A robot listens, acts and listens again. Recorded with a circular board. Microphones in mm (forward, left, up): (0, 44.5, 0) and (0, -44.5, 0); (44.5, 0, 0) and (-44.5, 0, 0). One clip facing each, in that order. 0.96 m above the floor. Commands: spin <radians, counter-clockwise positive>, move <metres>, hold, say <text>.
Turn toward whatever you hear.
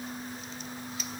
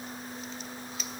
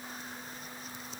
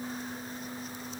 hold
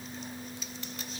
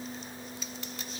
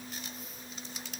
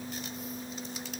hold
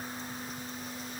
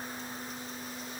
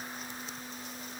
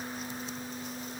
say I can't make out anything to turn to.